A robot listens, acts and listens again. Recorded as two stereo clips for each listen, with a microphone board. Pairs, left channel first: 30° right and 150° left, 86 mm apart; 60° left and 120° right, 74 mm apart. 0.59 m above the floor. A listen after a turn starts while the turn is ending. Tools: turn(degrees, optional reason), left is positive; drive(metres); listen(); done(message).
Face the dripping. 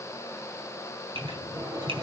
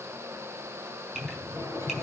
turn(degrees=160, reason="The dripping: 160° left.")
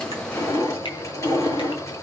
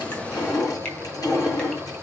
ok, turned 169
turn(degrees=-10, reason="The dripping is now 10° right.")
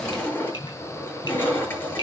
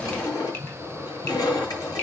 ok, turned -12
listen()
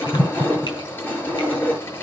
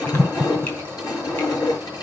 done("Found it: dripping, straight ahead, over 4 m away.")